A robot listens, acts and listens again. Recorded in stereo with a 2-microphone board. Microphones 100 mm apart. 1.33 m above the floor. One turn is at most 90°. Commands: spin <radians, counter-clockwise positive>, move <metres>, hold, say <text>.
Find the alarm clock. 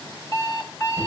spin 0.70
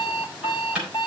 spin 1.57
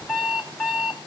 say Found it: an alarm clock, straight ahead.